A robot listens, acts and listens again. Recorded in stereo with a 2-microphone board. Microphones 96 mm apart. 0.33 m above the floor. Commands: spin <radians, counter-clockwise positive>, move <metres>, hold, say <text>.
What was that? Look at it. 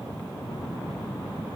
hold
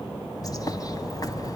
spin 0.70
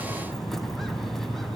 say Found it: a bird, straight ahead, 1 to 2 m away.